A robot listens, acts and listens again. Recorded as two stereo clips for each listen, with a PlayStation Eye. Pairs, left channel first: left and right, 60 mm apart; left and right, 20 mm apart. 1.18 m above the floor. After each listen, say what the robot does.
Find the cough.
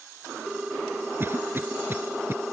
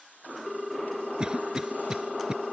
Turn 40° right.
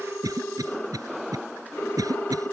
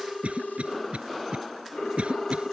Turn 100° right.
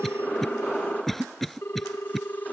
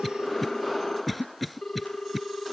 Found it: a cough, straight ahead.